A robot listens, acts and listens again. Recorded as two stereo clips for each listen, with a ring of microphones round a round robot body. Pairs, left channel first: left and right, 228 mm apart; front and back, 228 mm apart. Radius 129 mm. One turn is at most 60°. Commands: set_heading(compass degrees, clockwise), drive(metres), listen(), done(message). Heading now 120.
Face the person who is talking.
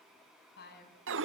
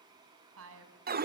set_heading(60)
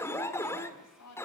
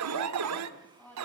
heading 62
set_heading(2)
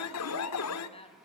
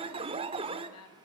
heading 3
set_heading(338)
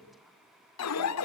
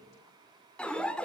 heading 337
listen()
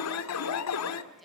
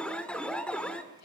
listen()
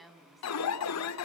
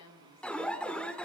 done("Found it: a woman speaking, straight ahead, over 4 m away.")